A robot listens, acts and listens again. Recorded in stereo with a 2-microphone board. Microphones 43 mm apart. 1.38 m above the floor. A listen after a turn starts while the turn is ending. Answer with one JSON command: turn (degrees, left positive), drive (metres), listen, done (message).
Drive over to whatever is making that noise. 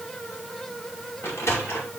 {"turn": 90}
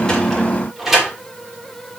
{"drive": 1.0}
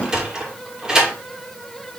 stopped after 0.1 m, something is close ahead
{"turn": -15}
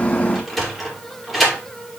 {"done": "Blocked. The sliding door is further on, straight ahead."}